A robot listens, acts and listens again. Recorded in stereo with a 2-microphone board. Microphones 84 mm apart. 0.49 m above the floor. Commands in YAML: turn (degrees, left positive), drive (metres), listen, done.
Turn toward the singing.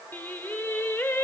turn: 25
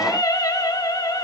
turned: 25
turn: 125
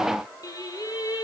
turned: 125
turn: 55
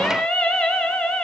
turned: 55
turn: 15
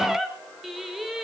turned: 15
done: "Found it: singing, straight ahead."